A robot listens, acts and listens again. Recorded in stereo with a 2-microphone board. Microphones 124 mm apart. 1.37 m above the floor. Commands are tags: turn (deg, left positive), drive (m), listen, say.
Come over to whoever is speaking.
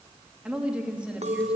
<turn deg="-30"/>
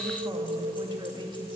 <turn deg="-140"/>
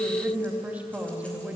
<turn deg="-10"/>
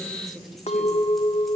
<drive m="1.0"/>
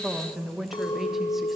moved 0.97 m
<drive m="1.0"/>
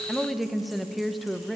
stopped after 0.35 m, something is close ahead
<say>I am next to the woman speaking.</say>